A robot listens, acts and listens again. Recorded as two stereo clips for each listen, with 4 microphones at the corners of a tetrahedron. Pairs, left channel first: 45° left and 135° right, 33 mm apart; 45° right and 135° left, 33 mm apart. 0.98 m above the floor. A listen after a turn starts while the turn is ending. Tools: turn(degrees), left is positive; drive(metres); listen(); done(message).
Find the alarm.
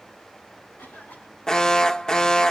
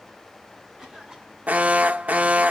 turn(degrees=115)
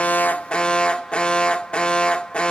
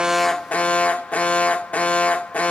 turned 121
done("Found it: an alarm, straight ahead, under 1 m away.")